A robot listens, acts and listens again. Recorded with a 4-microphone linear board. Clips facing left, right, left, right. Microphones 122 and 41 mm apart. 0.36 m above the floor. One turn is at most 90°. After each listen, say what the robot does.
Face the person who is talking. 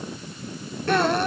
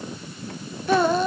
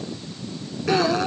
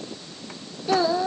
Turn 30° right.
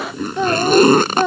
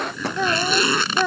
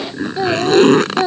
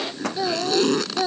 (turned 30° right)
Turn 20° left.
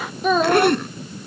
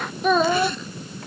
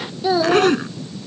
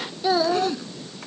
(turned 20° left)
Facing the child speaking.